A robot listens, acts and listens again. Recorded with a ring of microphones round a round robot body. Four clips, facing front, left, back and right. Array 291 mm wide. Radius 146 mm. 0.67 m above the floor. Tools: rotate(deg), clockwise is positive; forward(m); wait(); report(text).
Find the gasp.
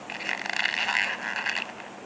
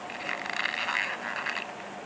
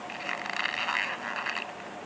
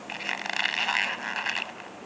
wait()
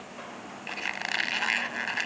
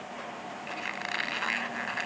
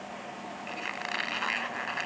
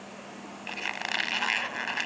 wait()
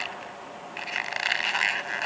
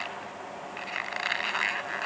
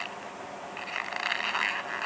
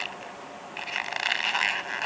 report("I can't make out a gasp to turn to.")